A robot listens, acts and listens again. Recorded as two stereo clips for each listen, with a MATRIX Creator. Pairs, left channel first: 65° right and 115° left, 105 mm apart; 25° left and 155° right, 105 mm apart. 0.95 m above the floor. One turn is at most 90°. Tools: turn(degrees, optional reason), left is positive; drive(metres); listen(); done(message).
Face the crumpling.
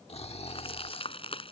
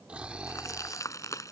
turn(degrees=-40, reason="The crumpling: 40° right.")
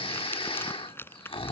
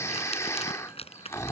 done("Found it: crumpling, straight ahead.")